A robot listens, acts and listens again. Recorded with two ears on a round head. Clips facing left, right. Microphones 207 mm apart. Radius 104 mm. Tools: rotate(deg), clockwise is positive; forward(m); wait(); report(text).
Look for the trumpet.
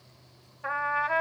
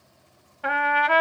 rotate(75)
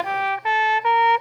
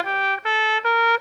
rotate(15)
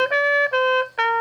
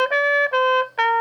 report("Found it: a trumpet, straight ahead.")